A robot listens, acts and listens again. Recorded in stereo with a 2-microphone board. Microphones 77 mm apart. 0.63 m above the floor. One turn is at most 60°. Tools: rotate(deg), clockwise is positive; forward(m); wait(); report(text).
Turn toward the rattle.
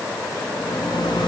rotate(-60)
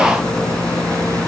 rotate(-10)
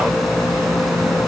report("Facing the rattle, over 4 m away.")